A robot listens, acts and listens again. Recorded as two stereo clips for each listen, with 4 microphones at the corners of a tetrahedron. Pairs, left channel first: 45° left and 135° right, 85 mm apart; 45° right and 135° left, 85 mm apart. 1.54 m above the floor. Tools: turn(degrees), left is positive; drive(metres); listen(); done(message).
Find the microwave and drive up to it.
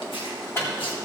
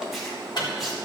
turn(degrees=-15)
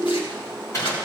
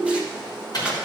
drive(metres=1.0)
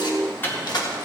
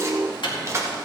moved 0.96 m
turn(degrees=-20)
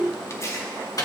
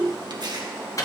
drive(metres=1.0)
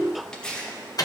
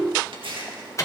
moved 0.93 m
drive(metres=1.0)
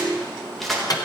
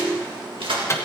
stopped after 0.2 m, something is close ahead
turn(degrees=10)
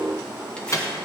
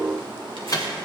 done("I am next to the microwave.")